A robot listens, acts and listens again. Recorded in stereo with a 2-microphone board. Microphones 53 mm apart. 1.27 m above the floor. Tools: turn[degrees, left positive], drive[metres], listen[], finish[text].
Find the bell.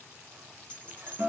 Thought: The bell: about 25° left or 155° left.
Action: turn[25]
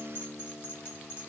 Thought: So it is at 130° left.
Action: turn[130]
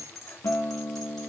Action: finish[Facing the bell, 2 to 4 m away.]